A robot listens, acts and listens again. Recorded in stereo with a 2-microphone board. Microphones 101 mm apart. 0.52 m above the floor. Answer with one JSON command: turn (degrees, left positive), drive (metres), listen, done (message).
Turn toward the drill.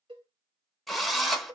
{"turn": 30}
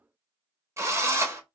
{"turn": -30}
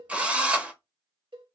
{"turn": -10}
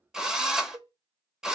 {"done": "Facing the drill."}